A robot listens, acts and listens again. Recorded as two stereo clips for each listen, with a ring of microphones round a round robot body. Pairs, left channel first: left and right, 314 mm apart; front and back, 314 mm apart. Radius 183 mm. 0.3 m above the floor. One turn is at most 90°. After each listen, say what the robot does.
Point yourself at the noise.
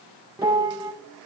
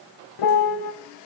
Turn 10° right.
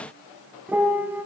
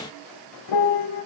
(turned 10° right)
Facing the piano.